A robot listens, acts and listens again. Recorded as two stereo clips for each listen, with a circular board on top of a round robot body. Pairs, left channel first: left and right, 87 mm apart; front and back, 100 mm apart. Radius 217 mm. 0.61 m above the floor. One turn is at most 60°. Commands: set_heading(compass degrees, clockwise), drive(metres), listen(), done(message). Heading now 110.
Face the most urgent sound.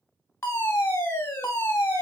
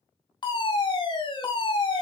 set_heading(75)
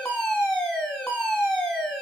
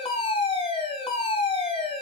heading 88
set_heading(73)
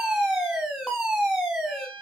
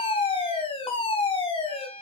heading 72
done("Found it: a fire alarm, straight ahead, over 4 m away.")